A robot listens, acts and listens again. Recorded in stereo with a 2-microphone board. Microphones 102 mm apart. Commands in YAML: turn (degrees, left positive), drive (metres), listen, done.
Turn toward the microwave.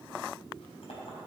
listen: true
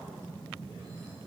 listen: true
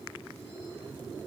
done: "I can't make out a microwave to turn to."